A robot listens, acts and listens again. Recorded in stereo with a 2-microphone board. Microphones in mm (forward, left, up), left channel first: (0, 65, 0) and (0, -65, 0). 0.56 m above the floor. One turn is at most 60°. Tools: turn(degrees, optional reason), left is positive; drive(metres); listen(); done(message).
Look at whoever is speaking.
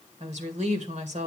turn(degrees=-60, reason="The woman speaking: about 60° right or 120° right.")
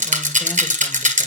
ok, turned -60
listen()
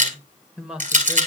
turn(degrees=-10, reason="So it is at 10° right.")
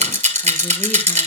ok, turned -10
listen()
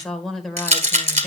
done("Facing the woman speaking.")